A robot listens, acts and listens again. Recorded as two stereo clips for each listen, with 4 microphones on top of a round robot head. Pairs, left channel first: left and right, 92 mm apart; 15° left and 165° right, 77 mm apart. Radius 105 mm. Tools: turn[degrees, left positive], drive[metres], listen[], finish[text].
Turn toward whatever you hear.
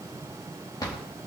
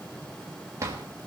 Thought: The drawer: 140° left.
Action: turn[140]
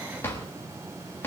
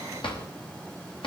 Thought: The drawer is now 25° left.
Action: turn[25]
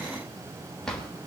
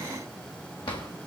Action: finish[Facing the drawer, 2 to 4 m away.]